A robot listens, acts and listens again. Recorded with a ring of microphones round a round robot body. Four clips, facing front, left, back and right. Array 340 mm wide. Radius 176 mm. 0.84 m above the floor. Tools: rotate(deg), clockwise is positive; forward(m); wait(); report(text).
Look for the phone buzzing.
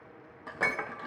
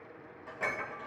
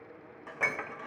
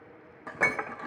wait()
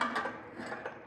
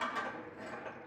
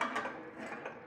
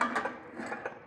wait()
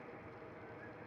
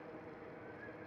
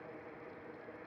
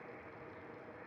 report("I can't make out a phone buzzing to turn to.")